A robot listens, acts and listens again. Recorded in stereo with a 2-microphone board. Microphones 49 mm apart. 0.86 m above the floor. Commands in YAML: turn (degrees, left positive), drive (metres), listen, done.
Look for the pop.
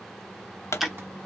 turn: 70
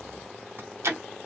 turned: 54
listen: true
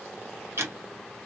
done: "I heard a pop, but can't make it out now. It was about 15° left or 55° left."